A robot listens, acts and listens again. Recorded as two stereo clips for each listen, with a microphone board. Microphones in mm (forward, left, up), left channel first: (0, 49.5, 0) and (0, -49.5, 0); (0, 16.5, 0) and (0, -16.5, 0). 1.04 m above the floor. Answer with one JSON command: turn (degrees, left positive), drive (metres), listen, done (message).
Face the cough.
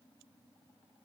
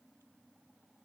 {"listen": true}
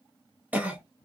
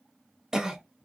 {"turn": -15}
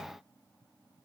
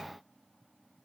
{"listen": true}
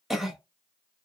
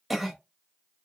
{"done": "Found it: a cough, straight ahead."}